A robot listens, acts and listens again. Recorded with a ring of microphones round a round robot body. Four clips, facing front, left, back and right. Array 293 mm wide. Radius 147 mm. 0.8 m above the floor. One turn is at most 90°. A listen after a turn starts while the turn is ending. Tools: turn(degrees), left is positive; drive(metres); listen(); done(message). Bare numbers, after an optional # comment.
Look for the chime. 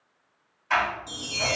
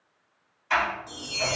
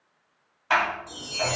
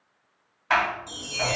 # The chime: 10° right.
turn(-10)
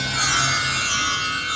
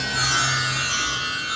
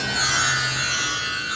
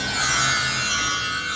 done("Facing the chime.")